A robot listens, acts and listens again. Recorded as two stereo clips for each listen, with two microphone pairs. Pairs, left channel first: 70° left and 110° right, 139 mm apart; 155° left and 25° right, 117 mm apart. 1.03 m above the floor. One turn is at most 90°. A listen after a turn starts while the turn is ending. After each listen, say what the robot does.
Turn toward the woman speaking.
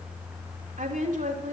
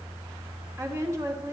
Turn 90° right.
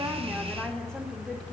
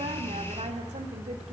Keep listening.
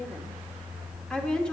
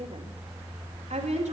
Turn 15° right.
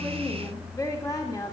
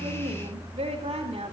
Facing the woman speaking.